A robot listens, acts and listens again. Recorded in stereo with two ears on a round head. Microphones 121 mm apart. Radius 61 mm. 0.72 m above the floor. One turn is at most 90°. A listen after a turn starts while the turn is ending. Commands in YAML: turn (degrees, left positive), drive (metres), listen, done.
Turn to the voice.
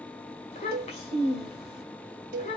turn: 50
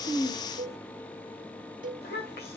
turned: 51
turn: 80
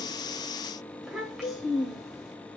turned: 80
done: "Found it: a child speaking, straight ahead, 1 to 2 m away."